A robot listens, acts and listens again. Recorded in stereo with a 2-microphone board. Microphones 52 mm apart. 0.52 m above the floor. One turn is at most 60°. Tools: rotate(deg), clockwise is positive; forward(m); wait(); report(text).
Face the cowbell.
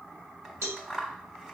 rotate(60)
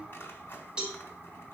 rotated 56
rotate(20)
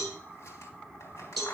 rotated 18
report("Found it: a cowbell, straight ahead, 2 to 4 m away.")